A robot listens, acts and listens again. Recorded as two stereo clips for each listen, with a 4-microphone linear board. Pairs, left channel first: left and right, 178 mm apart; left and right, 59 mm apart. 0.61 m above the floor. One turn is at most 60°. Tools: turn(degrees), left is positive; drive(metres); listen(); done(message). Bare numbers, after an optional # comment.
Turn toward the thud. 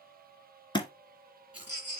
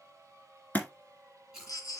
# The thud: about 25° left or 155° left.
turn(25)
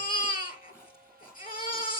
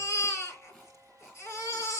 listen()
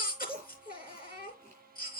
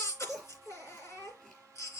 done("I heard a thud, but can't make it out now. It was about straight ahead or 130° left.")